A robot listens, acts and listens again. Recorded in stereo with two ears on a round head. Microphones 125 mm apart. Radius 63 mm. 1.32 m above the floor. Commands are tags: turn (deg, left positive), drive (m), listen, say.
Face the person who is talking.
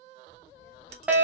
<turn deg="-20"/>
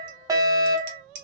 <say>Facing the child speaking.</say>